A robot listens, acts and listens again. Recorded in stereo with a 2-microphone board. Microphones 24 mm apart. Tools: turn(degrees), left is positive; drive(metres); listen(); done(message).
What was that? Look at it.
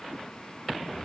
listen()
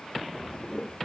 turn(degrees=55)
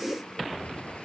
turn(degrees=70)
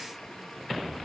listen()
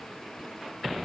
listen()
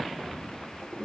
turn(degrees=-10)
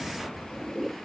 done("Facing the toilet flushing.")